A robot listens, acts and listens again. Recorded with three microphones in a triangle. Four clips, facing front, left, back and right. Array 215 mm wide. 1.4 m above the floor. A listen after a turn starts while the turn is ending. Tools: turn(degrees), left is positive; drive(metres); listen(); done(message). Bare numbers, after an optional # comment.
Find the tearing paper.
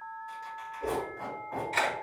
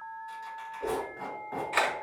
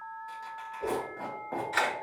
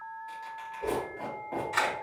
# The tearing paper: 165° right.
turn(-165)
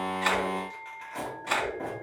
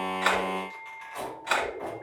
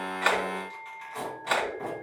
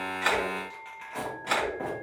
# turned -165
# The tearing paper is now 65° right.
turn(-65)
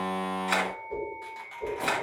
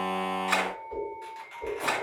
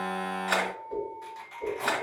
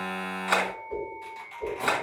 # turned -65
# The tearing paper is now 15° right.
turn(-15)
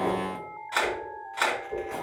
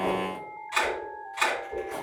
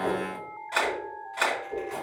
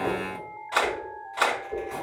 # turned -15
done("Found it: tearing paper, straight ahead.")